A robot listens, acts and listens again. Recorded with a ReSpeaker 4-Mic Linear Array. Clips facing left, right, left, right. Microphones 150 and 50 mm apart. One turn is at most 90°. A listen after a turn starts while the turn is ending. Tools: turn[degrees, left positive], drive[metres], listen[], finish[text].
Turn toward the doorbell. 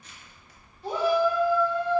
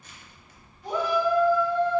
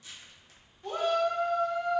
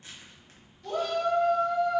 Action: listen[]
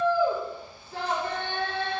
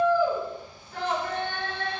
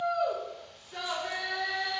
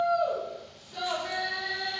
Action: listen[]
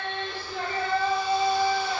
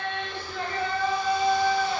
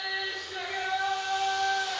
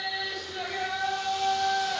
Action: finish[I can't make out a doorbell, only a shout and crushing.]